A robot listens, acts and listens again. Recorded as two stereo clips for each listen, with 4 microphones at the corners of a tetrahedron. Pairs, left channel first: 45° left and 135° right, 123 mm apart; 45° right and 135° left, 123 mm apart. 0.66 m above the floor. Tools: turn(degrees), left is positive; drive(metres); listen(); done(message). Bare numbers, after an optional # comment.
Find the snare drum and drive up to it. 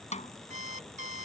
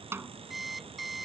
# The snare drum: 65° left.
turn(65)
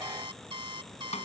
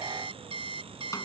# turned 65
listen()
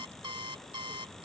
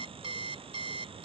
listen()
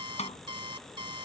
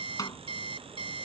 # The snare drum is now 20° left.
turn(20)
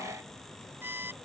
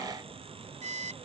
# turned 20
listen()
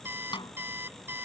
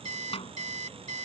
drive(1.0)
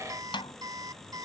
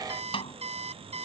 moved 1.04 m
drive(1.0)
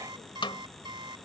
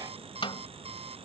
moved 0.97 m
drive(1.0)
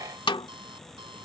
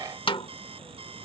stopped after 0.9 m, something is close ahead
done("I am next to the snare drum.")